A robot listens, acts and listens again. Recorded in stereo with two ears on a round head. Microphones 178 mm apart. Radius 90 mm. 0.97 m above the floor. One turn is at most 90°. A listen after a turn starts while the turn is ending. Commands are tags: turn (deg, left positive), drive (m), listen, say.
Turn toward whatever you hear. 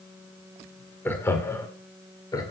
<turn deg="20"/>
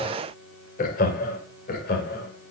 <turn deg="90"/>
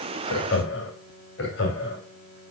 <turn deg="60"/>
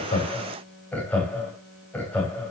<say>Facing the laughter.</say>